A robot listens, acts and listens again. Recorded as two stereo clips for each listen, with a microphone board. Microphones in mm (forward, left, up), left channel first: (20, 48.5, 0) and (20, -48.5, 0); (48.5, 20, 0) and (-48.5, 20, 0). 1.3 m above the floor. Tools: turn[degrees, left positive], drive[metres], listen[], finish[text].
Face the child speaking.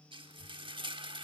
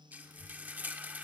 Thought: The child speaking: 125° left.
Action: turn[125]
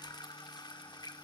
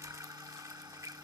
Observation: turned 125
Action: finish[Facing the child speaking, 2 to 4 m away.]